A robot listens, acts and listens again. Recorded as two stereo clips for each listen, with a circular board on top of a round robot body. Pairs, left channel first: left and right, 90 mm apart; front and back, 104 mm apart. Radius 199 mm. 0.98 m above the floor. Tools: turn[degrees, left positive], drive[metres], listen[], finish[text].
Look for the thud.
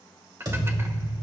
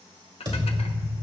Thought: The thud: 135° right.
Action: turn[-135]
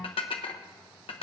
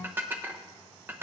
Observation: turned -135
Action: finish[Facing where the thud came from. I can't hear it now.]